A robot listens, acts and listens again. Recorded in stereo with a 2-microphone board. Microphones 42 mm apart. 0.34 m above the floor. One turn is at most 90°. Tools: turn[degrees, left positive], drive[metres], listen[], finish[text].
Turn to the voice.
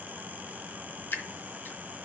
Action: listen[]
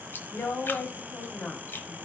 Thought: The woman speaking: about 55° left or 125° left.
Action: turn[55]
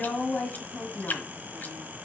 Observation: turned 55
Thought: So it is at 30° left.
Action: turn[30]
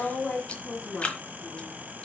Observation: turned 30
Thought: The woman speaking is now 20° left.
Action: turn[20]
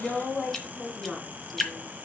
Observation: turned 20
Action: finish[Facing the woman speaking, 2 to 4 m away.]